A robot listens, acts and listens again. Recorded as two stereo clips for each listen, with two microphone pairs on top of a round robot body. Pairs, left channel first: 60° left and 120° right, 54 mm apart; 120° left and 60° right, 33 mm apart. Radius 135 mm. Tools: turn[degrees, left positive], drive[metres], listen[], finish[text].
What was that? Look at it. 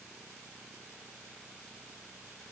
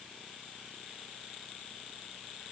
Action: listen[]
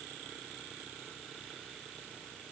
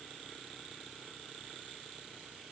Action: listen[]
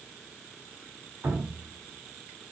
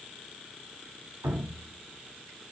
Thought: The dripping: 60° right.
Action: turn[-60]
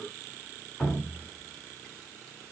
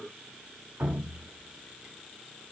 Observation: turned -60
Thought: The dripping is now 20° right.
Action: turn[-20]
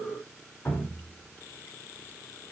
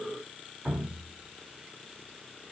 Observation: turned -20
Action: finish[Found it: dripping, straight ahead.]